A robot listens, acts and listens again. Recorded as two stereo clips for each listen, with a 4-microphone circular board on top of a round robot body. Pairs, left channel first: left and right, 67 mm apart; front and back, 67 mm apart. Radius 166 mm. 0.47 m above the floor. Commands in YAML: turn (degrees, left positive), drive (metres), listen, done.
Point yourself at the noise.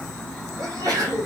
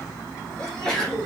turn: -80
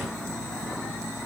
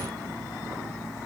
done: "I heard a sneeze from this way, but can't make it out now."